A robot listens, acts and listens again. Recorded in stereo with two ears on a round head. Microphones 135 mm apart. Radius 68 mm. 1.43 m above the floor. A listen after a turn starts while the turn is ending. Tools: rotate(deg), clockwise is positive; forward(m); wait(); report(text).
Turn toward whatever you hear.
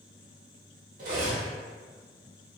rotate(55)
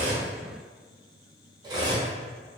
rotate(30)
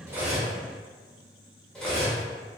report("Found it: cutlery clinking, straight ahead.")